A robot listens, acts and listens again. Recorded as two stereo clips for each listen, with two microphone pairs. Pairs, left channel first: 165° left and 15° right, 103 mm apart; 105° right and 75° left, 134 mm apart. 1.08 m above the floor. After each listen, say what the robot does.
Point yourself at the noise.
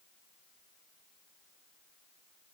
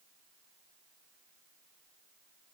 Keep listening.
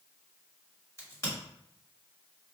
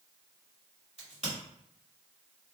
Turn 110° left.
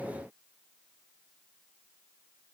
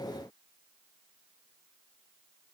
I heard a crack from this way, but can't make it out now.